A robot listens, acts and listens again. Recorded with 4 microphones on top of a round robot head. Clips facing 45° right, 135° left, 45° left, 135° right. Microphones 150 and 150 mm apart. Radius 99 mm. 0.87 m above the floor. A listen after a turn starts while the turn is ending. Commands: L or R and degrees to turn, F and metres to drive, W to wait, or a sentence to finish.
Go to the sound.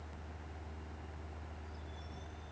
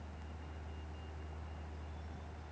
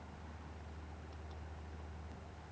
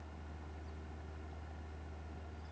W
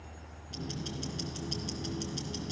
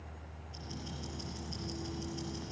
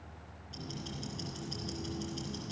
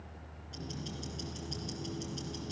R50
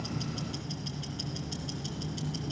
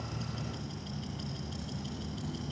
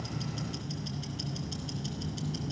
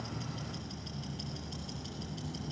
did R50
F1.0
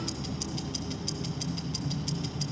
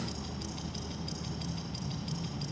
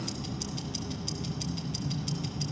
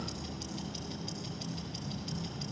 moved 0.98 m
F1.0
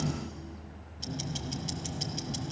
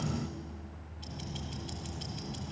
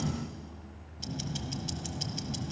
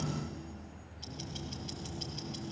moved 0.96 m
F1.0
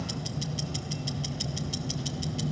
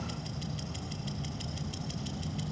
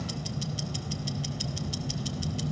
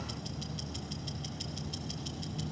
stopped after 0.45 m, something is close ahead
I am next to the ticking.